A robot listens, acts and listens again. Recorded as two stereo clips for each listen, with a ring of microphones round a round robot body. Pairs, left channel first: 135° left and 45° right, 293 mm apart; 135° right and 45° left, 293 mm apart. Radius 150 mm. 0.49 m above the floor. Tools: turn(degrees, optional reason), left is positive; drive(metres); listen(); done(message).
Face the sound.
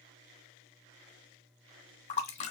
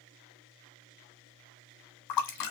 turn(degrees=-155, reason="The splash: 155° right.")
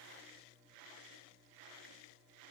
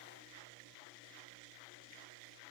done("I heard a splash from this way, but can't make it out now.")